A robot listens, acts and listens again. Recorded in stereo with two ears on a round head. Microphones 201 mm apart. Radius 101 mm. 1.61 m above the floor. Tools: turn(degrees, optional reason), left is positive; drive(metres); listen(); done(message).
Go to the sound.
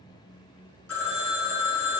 turn(degrees=70, reason="The phone ringing: about 70° left or 110° left.")
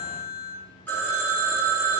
turn(degrees=10, reason="So it is at 10° left.")
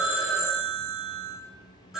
drive(metres=1.0)
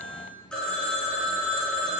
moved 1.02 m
drive(metres=1.0)
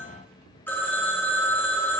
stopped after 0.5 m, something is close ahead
turn(degrees=10, reason="The phone ringing is now 10° left.")
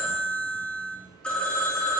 done("Arrived at the phone ringing, straight ahead.")